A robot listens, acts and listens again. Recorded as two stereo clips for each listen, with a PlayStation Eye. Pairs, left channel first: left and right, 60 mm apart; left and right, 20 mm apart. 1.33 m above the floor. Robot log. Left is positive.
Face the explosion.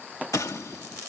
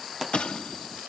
note: The explosion: about 65° left or 115° left.
cmd yaw +65
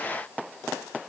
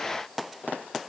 cmd idle
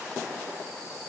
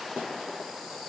end: I heard an explosion, but can't make it out now. It was about straight ahead or 50° left.